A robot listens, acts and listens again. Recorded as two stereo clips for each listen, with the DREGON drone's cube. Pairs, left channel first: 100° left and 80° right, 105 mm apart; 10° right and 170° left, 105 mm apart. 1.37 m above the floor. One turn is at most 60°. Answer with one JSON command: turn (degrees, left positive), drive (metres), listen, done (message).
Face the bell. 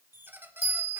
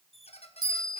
{"turn": -60}
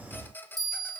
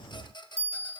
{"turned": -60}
{"turn": -25}
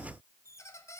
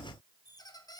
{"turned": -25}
{"listen": true}
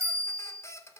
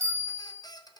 {"turn": -20}
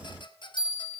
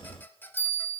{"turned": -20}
{"done": "Facing the bell."}